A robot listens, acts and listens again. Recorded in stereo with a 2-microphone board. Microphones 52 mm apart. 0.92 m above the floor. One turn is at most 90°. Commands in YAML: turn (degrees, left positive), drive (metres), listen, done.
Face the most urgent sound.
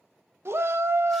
turn: -60
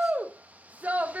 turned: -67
turn: -40
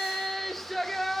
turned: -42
done: "Facing the shout, 1 to 2 m away."